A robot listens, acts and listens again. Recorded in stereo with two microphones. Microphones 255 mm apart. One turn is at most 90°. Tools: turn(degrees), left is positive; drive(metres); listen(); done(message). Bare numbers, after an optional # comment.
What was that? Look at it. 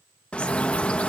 turn(30)
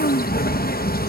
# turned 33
# So it is at 145° left.
turn(90)
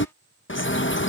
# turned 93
# The bird is now 50° left.
turn(50)
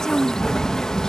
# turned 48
done("Found it: a bird, straight ahead.")